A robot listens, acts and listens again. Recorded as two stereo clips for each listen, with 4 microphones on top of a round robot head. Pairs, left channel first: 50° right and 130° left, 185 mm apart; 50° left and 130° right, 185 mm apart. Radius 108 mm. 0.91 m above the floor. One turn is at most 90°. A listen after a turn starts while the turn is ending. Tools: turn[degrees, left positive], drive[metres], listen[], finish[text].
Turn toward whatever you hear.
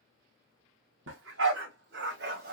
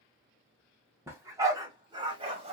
Thought: The dog barking: 170° left.
Action: turn[90]
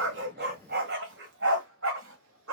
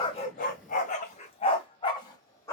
Thought: The dog barking is now 120° left.
Action: turn[90]
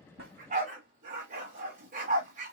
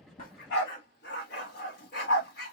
Thought: The dog barking is now 80° left.
Action: turn[80]
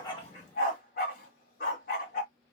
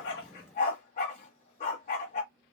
Action: finish[Found it: a dog barking, straight ahead.]